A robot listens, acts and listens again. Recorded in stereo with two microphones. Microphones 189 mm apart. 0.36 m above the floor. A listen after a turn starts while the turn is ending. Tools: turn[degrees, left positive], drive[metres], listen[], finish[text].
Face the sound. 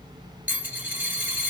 Action: turn[-30]
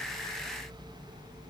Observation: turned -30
Action: listen[]
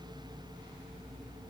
Action: finish[I heard a dropped coin, but can't make it out now. It was about 20° left or 140° right.]